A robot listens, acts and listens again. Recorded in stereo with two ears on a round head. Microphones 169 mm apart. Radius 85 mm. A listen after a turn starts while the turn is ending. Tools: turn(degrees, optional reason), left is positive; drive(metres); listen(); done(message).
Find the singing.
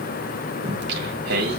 turn(degrees=-60, reason="The singing: about 60° right or 120° right.")
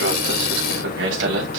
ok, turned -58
turn(degrees=-70, reason="So it is at 70° right.")
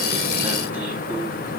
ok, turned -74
turn(degrees=-10, reason="The singing is now 10° right.")
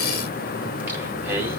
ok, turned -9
turn(degrees=-10, reason="The singing is now 10° right.")
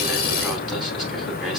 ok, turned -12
done("Found it: singing, straight ahead, over 4 m away.")